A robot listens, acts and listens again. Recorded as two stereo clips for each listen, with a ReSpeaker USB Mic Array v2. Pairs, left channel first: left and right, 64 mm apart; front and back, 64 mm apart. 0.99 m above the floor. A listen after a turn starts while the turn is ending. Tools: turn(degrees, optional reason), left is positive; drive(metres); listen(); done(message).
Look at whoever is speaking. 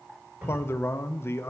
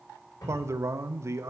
turn(degrees=140, reason="The man speaking: 140° left.")
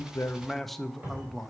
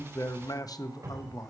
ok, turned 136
done("Found it: a man speaking, straight ahead.")